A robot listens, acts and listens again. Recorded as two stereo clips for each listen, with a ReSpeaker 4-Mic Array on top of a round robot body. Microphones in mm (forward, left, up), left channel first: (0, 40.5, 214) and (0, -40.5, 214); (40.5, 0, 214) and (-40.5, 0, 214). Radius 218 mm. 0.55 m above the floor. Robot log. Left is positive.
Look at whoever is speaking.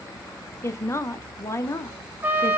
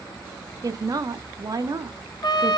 note: The woman speaking: 145° left.
cmd yaw +145
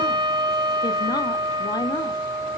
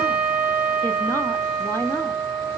note: The woman speaking is now 60° left.
cmd yaw +60
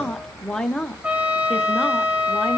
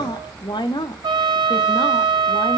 end: Found it: a woman speaking, straight ahead, 1 to 2 m away.